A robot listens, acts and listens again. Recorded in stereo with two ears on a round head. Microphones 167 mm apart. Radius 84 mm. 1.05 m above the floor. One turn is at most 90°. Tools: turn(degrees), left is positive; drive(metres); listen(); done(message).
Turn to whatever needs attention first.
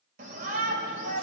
turn(degrees=-50)
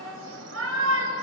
turn(degrees=-80)
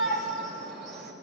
done("Found it: a shout, straight ahead, over 4 m away.")